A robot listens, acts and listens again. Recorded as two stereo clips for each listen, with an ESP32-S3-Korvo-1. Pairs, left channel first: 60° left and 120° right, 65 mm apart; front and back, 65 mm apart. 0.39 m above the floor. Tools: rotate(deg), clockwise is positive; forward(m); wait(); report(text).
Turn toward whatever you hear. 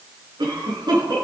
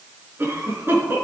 rotate(120)
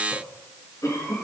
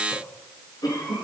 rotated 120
rotate(-15)
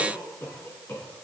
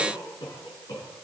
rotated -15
report("Found it: a cough, straight ahead, over 4 m away.")